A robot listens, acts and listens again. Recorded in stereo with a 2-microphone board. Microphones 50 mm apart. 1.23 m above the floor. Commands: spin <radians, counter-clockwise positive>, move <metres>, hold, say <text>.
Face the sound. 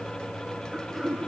spin 0.52
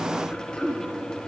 spin 2.62
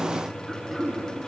say Facing the throat clearing.